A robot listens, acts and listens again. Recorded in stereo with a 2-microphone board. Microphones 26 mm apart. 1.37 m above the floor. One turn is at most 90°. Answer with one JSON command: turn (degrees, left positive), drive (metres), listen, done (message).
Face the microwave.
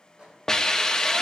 {"turn": -50}
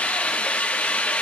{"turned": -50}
{"listen": true}
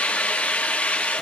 {"listen": true}
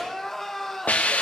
{"done": "I heard a microwave, but can't make it out now. It was about straight ahead or 80° right."}